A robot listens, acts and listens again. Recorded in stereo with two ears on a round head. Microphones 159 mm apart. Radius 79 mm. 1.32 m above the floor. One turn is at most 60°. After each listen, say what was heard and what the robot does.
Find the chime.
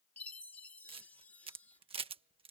Turn 30° left.
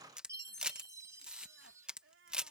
So it is at 20° right. Turn 20° right.
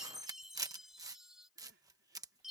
Found it: a chime, straight ahead.